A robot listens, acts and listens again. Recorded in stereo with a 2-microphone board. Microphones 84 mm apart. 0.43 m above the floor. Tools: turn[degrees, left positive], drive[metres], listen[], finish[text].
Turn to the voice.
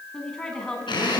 Action: turn[30]
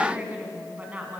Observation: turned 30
Thought: So it is at 20° right.
Action: turn[-20]
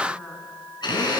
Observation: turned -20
Action: listen[]
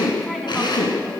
Action: listen[]
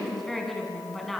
Action: finish[Found it: a woman speaking, straight ahead, over 4 m away.]